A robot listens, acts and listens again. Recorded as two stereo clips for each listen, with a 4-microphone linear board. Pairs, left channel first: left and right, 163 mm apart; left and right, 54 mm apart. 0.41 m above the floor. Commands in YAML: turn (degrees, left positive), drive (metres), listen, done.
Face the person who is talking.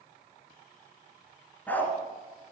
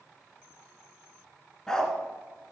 listen: true
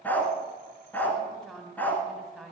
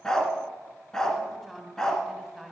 turn: 30
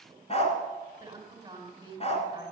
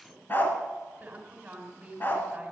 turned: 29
turn: -25
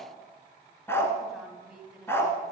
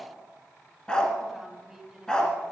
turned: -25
done: "Facing the woman speaking."